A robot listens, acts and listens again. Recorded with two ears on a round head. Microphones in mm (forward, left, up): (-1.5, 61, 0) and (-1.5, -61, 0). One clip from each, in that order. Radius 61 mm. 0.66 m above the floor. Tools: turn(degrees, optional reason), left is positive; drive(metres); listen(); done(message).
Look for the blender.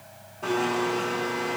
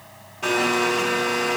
turn(degrees=-55, reason="The blender: about 55° right or 125° right.")
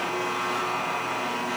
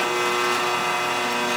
turn(degrees=-70, reason="So it is at 70° right.")
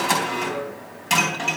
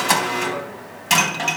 turn(degrees=-15, reason="The blender is now 15° right.")
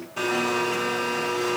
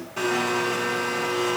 done("Facing the blender.")